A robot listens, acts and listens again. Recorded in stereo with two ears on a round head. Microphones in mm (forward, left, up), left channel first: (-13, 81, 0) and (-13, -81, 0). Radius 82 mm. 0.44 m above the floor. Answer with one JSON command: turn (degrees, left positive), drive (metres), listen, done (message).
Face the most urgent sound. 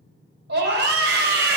{"turn": -60}
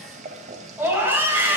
{"turn": -10}
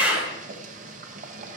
{"done": "Facing the scream, 2 to 4 m away."}